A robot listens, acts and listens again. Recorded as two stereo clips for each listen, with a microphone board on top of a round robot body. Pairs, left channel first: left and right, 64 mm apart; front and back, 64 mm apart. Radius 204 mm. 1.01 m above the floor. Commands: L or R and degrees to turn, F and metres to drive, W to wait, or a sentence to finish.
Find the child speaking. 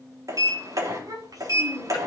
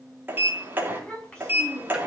R80
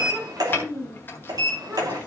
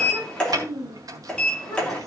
R35
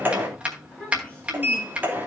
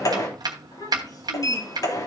L15
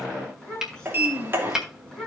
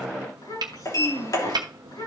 Found it: a child speaking, straight ahead.